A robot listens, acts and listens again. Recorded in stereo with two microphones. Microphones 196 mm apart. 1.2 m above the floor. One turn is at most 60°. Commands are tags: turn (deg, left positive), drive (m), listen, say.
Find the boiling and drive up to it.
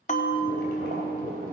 <turn deg="-45"/>
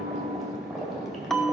<drive m="1.0"/>
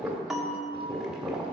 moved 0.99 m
<drive m="1.0"/>
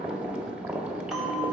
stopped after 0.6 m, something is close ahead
<say>I am next to the boiling.</say>